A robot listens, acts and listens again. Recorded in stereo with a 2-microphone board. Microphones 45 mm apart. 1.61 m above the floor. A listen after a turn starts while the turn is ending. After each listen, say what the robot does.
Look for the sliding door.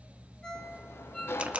Turn 65° left.
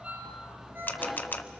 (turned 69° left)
Found it: a sliding door, straight ahead, under 1 m away.